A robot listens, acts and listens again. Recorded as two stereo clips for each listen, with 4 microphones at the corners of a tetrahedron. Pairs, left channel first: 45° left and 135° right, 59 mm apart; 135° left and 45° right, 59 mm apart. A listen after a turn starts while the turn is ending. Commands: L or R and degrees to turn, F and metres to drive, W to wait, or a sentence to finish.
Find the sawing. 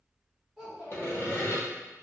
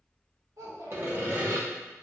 Found it: sawing, straight ahead, under 1 m away.